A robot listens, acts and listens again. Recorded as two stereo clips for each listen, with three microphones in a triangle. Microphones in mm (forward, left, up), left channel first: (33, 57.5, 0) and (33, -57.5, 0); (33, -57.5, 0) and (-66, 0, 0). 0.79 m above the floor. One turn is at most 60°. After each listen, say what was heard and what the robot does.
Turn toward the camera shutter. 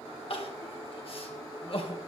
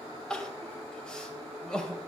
Keep listening.
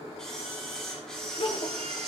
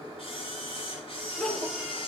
Facing the camera shutter, over 4 m away.